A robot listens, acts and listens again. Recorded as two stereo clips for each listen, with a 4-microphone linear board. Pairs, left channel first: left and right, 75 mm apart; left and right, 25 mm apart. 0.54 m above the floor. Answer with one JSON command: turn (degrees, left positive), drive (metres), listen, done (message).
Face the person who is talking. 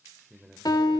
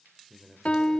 {"turn": -30}
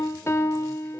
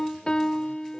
{"listen": true}
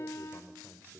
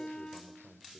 {"turn": 25}
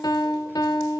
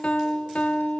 {"listen": true}
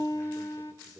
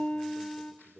{"listen": true}
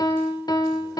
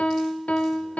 {"done": "Facing where the man speaking came from. I can't hear it now."}